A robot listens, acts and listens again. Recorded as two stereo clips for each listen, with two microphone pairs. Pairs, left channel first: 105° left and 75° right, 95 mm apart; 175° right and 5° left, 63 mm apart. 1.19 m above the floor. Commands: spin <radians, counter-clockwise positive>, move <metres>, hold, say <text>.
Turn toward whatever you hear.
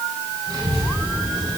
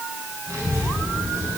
spin -0.52
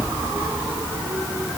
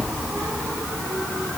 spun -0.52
spin -0.17
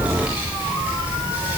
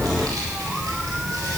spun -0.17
say Facing the child speaking, 2 to 4 m away.